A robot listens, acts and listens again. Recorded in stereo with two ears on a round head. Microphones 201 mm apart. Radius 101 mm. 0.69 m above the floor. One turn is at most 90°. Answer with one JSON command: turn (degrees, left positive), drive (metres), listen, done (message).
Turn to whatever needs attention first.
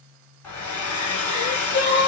{"turn": 50}
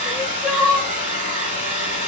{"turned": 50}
{"done": "Facing the crying, under 1 m away."}